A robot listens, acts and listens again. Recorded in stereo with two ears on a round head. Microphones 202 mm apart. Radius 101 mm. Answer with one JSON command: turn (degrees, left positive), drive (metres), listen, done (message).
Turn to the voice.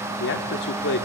{"turn": 50}
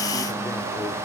{"listen": true}
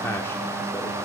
{"listen": true}
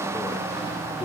{"done": "I heard a man speaking, but can't make it out now. It was about straight ahead or 80° left."}